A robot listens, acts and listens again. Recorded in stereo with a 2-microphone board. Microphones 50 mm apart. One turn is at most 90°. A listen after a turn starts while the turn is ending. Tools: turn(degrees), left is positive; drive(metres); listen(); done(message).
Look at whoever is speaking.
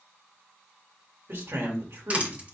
turn(degrees=-60)
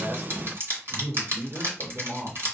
turn(degrees=-55)
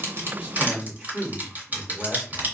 turn(degrees=-15)
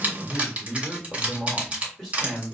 done("Found it: a man speaking, straight ahead.")